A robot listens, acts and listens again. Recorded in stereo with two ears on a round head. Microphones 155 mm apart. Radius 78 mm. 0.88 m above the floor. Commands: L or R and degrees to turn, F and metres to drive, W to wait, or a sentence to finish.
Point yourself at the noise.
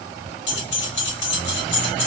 L90
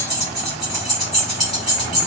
Facing the keys jangling, 1 to 2 m away.